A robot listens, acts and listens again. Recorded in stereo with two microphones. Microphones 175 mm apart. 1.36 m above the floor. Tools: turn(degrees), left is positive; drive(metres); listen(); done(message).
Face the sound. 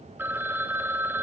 turn(degrees=-30)
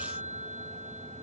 turn(degrees=-140)
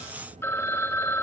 turn(degrees=15)
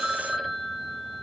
done("Facing the phone ringing, 1 to 2 m away.")